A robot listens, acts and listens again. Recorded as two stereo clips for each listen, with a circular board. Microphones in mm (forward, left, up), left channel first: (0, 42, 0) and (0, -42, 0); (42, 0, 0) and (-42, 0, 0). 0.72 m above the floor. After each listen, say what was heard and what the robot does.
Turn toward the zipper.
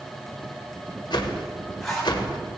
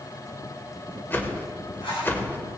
Facing the zipper, 2 to 4 m away.